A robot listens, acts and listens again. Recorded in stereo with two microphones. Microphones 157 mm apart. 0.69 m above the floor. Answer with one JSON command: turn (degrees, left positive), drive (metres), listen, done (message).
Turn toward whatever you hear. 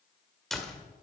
{"turn": 30}
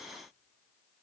{"listen": true}
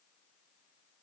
{"done": "I heard a door slam, but can't make it out now. It was about 30° right or 150° left."}